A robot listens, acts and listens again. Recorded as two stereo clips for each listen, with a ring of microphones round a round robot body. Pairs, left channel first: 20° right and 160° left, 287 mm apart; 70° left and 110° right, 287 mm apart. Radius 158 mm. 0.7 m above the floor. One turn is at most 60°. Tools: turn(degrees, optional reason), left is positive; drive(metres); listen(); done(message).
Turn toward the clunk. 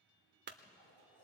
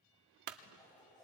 turn(degrees=-60, reason="The clunk: 145° right.")
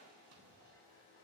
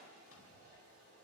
turn(degrees=-60, reason="Nothing new. It was at 85° right.")
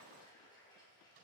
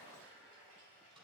turn(degrees=-25, reason="Nothing new. It was at 25° right.")
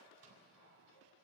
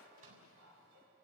done("I heard a clunk from this way, but can't make it out now.")